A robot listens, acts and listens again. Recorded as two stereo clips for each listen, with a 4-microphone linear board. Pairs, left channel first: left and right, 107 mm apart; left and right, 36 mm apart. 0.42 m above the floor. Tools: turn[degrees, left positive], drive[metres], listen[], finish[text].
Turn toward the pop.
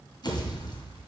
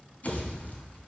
Thought: The pop: about 45° left or 135° left.
Action: turn[45]
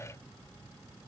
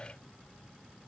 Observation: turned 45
Action: listen[]
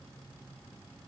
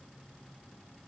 Action: finish[I heard a pop, but can't make it out now. It was about straight ahead or 90° left.]